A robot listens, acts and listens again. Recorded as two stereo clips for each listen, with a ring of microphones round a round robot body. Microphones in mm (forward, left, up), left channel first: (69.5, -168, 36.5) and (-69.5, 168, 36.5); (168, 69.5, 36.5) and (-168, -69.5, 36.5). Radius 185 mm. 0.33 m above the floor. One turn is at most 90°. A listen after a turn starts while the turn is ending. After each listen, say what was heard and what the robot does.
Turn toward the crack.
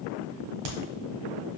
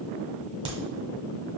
The crack: 125° left. Turn 90° left.
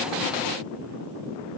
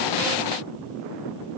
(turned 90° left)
Nothing new. It was at 35° left. Turn 35° left.
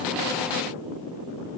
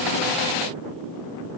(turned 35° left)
I heard a crack from this way, but can't make it out now.